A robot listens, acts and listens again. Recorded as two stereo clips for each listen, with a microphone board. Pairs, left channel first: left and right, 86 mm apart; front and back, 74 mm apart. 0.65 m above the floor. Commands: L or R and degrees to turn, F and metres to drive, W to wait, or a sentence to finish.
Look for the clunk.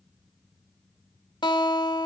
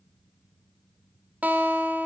W
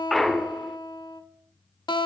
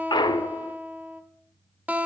Facing the clunk.